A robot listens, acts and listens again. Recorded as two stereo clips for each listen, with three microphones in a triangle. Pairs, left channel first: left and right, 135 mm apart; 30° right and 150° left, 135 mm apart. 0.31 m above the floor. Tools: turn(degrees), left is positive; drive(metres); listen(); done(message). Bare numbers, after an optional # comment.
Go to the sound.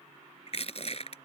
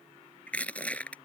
# The crushing: 50° left.
turn(50)
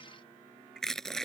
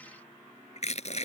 drive(1.0)
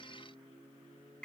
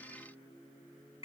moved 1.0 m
listen()
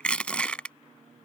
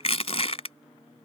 # The crushing is now 10° left.
turn(10)
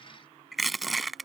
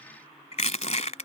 drive(1.0)
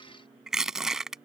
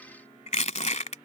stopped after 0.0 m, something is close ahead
done("I am next to the crushing.")